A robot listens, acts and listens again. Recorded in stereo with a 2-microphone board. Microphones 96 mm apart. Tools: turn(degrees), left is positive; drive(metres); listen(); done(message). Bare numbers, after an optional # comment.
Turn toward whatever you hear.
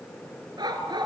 # The dog barking: about 55° right or 125° right.
turn(-55)
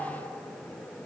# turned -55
listen()
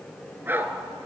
# So it is at 25° right.
turn(-25)
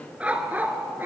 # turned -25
# The dog barking is now 20° right.
turn(-20)
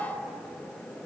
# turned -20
listen()
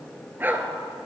# The dog barking is now 20° right.
turn(-20)
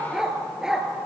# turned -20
done("Found it: a dog barking, straight ahead.")